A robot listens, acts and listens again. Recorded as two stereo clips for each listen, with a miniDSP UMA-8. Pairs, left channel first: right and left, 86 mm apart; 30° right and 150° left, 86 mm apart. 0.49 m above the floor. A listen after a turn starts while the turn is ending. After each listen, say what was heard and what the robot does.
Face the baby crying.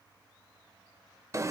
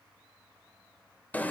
Keep listening.
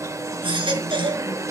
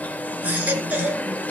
The baby crying: 80° left. Turn 80° left.
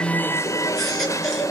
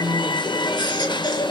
Found it: a baby crying, straight ahead.